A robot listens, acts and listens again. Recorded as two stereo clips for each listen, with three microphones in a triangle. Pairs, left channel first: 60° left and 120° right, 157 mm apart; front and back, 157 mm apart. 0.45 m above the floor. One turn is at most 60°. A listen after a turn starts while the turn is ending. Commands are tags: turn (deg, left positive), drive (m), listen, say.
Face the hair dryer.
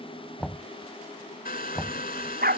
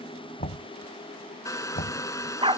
<turn deg="60"/>
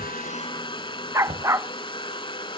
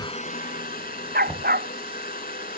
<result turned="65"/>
<say>Facing the hair dryer.</say>